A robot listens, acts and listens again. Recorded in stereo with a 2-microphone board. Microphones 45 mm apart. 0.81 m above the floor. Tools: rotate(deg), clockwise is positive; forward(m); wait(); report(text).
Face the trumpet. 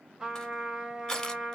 rotate(30)
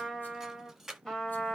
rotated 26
rotate(-15)
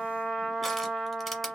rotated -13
report("Facing the trumpet.")